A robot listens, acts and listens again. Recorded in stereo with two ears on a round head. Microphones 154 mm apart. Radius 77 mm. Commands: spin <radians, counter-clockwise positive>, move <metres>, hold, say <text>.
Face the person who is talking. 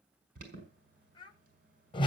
spin 0.52
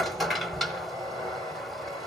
hold
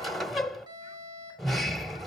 hold
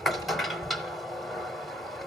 say I heard a child speaking, but can't make it out now. It was about straight ahead or 120° left.